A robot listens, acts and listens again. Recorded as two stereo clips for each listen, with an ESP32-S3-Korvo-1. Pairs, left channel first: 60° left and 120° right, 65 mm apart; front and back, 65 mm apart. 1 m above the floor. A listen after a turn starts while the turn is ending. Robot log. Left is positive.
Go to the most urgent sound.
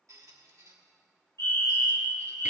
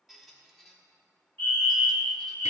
note: The fire alarm: 55° left.
cmd yaw +55
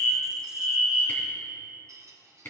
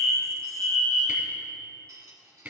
cmd fwd 1.0
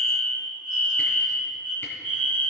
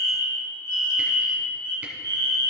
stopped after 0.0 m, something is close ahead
end: Something is in my way. I am facing the fire alarm but have not reached it.